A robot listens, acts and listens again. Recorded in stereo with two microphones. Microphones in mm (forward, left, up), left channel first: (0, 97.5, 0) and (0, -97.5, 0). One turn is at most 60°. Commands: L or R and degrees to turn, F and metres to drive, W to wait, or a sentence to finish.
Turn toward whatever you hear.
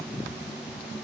W
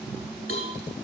L35
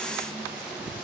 W
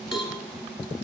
Found it: a cowbell, straight ahead, 1 to 2 m away.